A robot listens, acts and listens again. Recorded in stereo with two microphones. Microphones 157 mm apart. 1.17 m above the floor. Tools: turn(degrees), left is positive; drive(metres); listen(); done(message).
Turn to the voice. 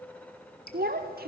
turn(degrees=-75)
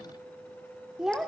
done("Found it: a child speaking, straight ahead, 1 to 2 m away.")